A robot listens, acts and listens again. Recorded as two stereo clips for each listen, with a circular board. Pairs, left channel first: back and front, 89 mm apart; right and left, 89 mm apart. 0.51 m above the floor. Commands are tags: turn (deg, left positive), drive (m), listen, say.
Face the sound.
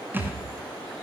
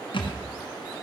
<turn deg="-70"/>
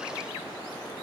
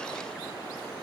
<say>Facing where the thud came from. I can't hear it now.</say>